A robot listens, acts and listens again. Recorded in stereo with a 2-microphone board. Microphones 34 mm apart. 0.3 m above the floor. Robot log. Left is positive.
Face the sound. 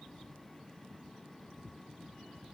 cmd idle
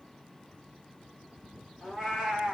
cmd yaw -30
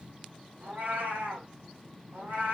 note: So it is at 125° right.
cmd yaw -125
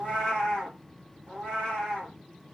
note: The cat meowing is now 15° left.
cmd yaw +15
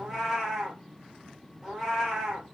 end: Facing the cat meowing, 2 to 4 m away.